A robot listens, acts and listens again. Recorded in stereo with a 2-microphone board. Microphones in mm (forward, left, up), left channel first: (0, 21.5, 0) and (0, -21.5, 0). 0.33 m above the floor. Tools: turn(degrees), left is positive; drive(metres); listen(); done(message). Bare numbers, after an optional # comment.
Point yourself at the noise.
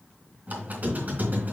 # The squeak: about 40° right or 140° right.
turn(-40)
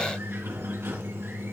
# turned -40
# So it is at 95° right.
turn(-95)
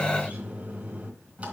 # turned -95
# The squeak is now 30° right.
turn(-30)
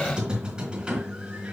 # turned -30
# The squeak is now 20° right.
turn(-20)
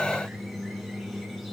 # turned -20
done("Found it: a squeak, straight ahead.")